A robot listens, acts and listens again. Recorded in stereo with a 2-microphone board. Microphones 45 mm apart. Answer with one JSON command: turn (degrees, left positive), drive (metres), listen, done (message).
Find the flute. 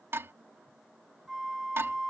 {"turn": -30}
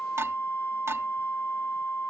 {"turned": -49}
{"turn": 45}
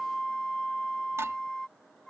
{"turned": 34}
{"turn": 10}
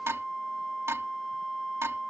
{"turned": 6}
{"done": "Facing the flute."}